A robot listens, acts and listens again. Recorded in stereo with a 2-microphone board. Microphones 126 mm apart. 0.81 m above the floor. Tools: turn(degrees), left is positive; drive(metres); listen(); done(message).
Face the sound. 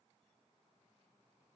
listen()
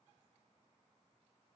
listen()
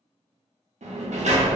turn(degrees=-65)
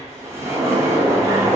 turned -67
turn(degrees=-25)
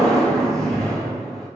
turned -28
done("Found it: a sliding door, straight ahead.")